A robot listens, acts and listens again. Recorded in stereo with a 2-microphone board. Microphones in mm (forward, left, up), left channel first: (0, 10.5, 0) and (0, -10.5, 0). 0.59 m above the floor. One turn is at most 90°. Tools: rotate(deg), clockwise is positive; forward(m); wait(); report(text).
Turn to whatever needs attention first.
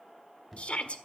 rotate(-60)
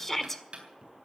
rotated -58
rotate(-15)
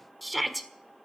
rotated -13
report("Facing the shout.")